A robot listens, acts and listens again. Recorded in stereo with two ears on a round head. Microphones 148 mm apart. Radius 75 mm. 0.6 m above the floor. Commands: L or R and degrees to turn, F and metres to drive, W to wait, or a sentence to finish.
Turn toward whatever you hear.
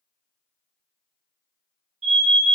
R45
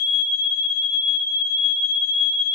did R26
R110
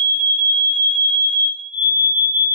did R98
R10
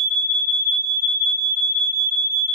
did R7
Found it: an alarm, straight ahead, 1 to 2 m away.